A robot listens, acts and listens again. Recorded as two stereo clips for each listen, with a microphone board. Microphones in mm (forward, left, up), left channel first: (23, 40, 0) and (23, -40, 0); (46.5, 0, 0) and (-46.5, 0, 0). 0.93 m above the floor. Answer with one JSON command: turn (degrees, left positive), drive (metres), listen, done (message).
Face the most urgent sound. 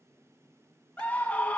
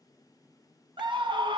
{"turn": 160}
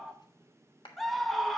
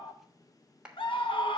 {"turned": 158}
{"done": "Facing the scream, 1 to 2 m away."}